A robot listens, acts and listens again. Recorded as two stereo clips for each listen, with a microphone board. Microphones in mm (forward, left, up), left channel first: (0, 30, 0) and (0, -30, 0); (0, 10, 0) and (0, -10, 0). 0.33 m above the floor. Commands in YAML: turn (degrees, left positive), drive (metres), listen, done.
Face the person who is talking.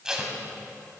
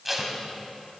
listen: true
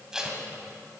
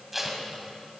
listen: true
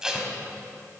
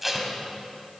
done: "I can't make out anyone speaking to turn to."